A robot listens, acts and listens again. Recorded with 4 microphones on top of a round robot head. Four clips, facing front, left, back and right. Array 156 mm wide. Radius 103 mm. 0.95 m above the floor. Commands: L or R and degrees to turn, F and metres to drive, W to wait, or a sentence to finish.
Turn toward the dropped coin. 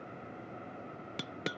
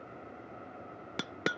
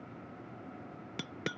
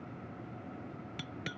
L90
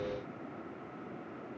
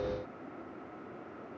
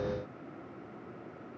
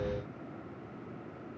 Facing where the dropped coin came from. I can't hear it now.